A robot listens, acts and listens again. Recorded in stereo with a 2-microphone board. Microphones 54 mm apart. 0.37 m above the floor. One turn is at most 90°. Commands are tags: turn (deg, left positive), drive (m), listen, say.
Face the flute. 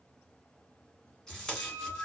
<turn deg="90"/>
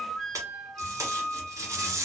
<say>Facing the flute, under 1 m away.</say>